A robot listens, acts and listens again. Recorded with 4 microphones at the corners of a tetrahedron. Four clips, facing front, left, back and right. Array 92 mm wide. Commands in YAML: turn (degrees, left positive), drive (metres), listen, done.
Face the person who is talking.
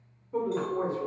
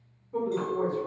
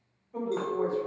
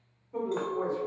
turn: 10
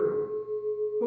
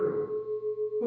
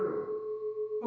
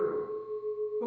turn: -20
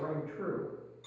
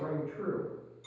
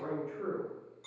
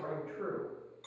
turn: -10
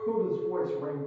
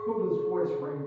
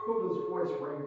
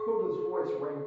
turn: -35
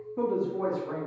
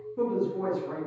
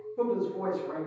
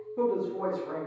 turn: -25
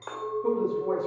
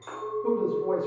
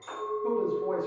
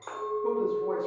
done: "Found it: a woman speaking, straight ahead."